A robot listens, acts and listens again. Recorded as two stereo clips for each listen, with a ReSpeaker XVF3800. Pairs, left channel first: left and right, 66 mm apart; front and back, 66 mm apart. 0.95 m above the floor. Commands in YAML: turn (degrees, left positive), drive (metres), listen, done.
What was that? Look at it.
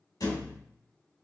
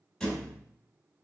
turn: 85
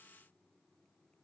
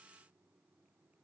done: "I heard a thud from this way, but can't make it out now."